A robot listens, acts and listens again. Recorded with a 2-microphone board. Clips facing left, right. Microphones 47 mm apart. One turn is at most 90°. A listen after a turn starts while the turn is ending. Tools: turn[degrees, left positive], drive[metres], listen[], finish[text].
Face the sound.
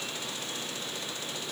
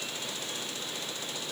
Action: listen[]
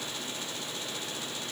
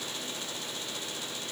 Action: listen[]
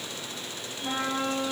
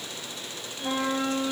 Thought: The trumpet: about 65° right or 115° right.
Action: turn[-65]
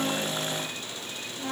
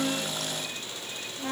Action: finish[Facing the trumpet.]